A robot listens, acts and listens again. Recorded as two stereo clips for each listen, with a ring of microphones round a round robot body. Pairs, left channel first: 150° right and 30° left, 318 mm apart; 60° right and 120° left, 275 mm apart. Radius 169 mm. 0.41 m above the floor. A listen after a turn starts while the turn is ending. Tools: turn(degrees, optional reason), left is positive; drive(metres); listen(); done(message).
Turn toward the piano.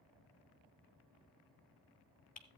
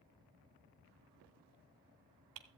listen()
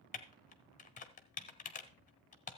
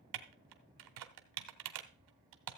listen()
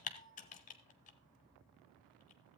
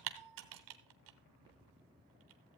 done("I can't make out a piano, only typing on a keyboard.")